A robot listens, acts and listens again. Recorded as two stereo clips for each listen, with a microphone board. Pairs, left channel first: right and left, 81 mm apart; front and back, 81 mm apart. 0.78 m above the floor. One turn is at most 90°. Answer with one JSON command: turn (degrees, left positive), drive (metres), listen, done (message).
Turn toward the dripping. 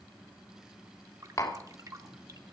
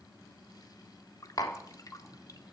{"turn": 45}
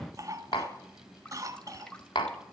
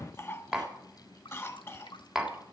{"turn": -10}
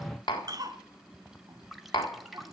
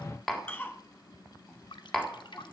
{"done": "Facing the dripping."}